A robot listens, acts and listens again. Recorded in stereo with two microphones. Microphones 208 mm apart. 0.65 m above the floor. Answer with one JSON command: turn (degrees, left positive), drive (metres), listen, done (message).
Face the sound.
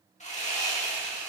{"turn": 35}
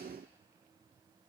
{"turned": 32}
{"listen": true}
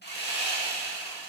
{"turn": 105}
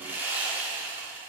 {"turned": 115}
{"turn": -10}
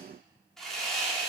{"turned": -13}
{"done": "Found it: sawing, straight ahead."}